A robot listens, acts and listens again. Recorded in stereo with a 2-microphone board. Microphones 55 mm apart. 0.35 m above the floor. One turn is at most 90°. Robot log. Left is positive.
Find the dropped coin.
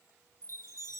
cmd idle
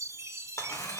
note: The dropped coin: about 65° left or 115° left.
cmd yaw +65
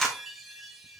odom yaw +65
end: Facing the dropped coin, 2 to 4 m away.